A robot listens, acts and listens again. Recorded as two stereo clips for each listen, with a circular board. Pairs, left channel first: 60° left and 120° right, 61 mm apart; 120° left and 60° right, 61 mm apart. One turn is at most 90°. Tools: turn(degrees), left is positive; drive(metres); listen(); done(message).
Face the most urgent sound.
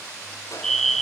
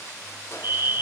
turn(degrees=-25)
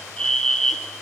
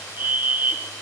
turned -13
turn(degrees=-10)
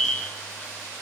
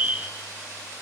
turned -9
done("Found it: a fire alarm, straight ahead.")